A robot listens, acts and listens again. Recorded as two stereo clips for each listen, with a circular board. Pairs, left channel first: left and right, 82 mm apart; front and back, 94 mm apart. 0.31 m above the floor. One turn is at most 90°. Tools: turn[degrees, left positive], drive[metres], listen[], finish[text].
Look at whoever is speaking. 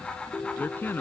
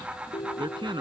Thought: The man speaking: 155° left.
Action: turn[90]
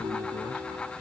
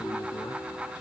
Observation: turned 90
Thought: Nothing new. It was at 65° left.
Action: turn[65]
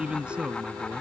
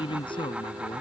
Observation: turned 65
Thought: The man speaking is now 15° right.
Action: turn[-15]
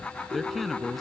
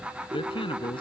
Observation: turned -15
Action: finish[Found it: a man speaking, straight ahead.]